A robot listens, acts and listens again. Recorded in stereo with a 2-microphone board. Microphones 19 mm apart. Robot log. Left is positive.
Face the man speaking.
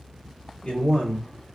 cmd yaw +90
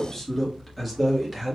note: So it is at 15° right.
cmd yaw -15
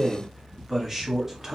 note: The man speaking is now 25° right.
cmd yaw -25
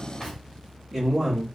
note: The man speaking is now 20° right.
cmd yaw -20
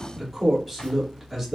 end: Found it: a man speaking, straight ahead, 2 to 4 m away.